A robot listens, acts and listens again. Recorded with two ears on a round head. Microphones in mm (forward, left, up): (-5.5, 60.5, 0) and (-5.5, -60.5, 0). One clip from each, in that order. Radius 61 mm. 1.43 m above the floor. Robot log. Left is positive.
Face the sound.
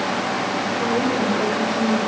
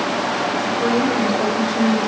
cmd yaw -90
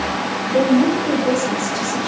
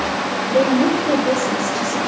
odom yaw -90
note: So it is at 25° left.
cmd yaw +25
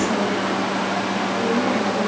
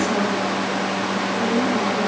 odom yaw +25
cmd idle
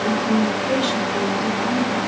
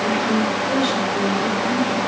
note: The woman speaking is now 20° left.
cmd yaw +20
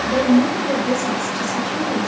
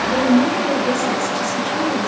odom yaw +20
end: Found it: a woman speaking, straight ahead.